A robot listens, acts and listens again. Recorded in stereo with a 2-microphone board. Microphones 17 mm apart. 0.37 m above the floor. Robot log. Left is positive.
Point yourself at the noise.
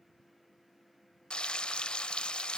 note: The frying: about 55° left or 125° left.
cmd yaw +55
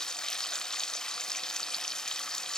note: So it is at 45° left.
cmd yaw +45
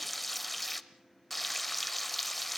note: The frying is now 10° left.
cmd yaw +10
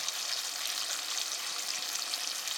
end: Found it: frying, straight ahead, under 1 m away.